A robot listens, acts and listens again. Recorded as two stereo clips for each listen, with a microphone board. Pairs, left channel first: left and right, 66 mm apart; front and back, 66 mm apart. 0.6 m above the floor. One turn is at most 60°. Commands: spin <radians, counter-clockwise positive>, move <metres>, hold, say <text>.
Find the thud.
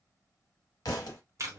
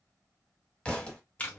spin 1.05
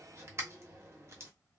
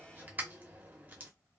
spin 0.26
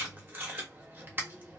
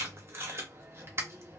say I heard a thud from this way, but can't make it out now.